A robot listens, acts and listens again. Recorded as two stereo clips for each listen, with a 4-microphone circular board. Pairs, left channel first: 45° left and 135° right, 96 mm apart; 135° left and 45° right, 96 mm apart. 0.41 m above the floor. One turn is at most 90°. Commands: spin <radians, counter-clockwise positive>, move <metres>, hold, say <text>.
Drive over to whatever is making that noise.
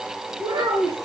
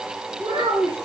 spin -1.48
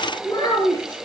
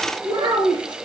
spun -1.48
move 1.0
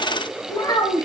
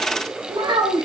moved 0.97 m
move 1.0
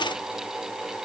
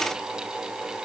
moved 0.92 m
hold
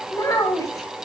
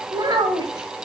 move 1.0
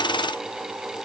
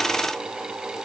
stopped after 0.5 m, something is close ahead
hold
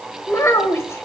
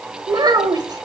spin -0.17
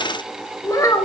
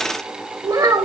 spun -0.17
say I am next to the child speaking.